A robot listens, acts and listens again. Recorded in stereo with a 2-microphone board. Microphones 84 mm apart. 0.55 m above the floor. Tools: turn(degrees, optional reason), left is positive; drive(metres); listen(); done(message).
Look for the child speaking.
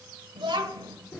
turn(degrees=-70, reason="The child speaking: about 70° right or 110° right.")
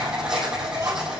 listen()
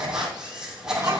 listen()
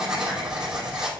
done("I heard a child speaking, but can't make it out now. It was about straight ahead or 40° right.")